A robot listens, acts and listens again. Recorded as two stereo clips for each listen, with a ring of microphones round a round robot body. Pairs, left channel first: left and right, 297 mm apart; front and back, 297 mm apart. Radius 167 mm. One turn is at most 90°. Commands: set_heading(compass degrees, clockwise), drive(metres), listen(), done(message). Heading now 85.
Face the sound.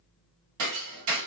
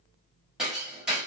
set_heading(175)
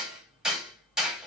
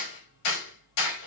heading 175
done("Found it: hammering, straight ahead.")